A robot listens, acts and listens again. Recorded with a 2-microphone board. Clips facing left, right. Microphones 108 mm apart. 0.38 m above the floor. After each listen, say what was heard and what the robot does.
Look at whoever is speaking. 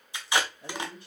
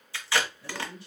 The man speaking: about 55° left or 125° left. Turn 55° left.
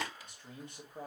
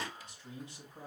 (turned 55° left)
So it is at 65° left. Turn 65° left.
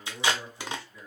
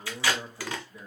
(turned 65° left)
The man speaking is now 25° right. Turn 25° right.
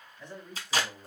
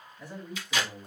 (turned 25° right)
The man speaking is now 10° right. Turn 10° right.
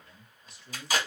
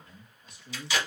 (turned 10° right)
Found it: a man speaking, straight ahead, 2 to 4 m away.